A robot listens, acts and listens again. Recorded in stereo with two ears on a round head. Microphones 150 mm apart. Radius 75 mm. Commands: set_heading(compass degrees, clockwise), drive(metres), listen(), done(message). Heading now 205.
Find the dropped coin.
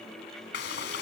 listen()
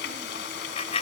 set_heading(170)
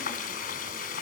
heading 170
listen()
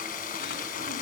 done("I heard a dropped coin, but can't make it out now. It was about straight ahead or 110° left.")